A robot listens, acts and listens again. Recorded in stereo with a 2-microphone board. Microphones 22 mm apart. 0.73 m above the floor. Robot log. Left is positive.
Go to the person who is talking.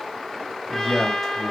cmd yaw +30
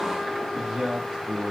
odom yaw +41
note: So it is at 30° right.
cmd yaw -30
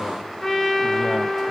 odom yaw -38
cmd idle
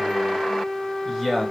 cmd fwd 1.0
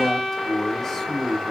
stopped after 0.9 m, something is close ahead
note: The man speaking is now 20° left.
cmd yaw +20
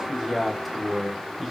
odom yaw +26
end: Blocked. The man speaking is further on, straight ahead.